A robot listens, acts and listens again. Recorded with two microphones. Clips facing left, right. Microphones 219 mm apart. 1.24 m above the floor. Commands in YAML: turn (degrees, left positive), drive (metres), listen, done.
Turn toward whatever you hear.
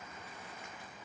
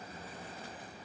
listen: true
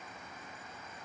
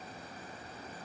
listen: true
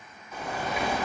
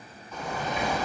turn: 30
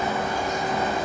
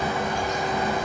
turn: 140
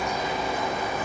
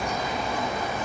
done: "Facing the bird."